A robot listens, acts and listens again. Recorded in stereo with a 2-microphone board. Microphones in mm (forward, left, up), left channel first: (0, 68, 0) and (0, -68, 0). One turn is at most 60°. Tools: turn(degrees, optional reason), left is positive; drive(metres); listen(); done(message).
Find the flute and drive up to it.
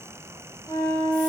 turn(degrees=25, reason="The flute: about 25° left or 155° left.")
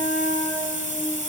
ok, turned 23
drive(metres=1.0)
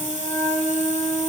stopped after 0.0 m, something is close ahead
done("Something is in my way. I am facing the flute but have not reached it.")